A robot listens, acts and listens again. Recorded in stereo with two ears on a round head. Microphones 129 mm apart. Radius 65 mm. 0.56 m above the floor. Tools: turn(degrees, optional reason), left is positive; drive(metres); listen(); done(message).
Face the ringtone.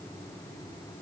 listen()
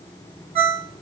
turn(degrees=-40, reason="The ringtone: about 40° right or 140° right.")
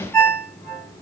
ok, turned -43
done("Facing the ringtone.")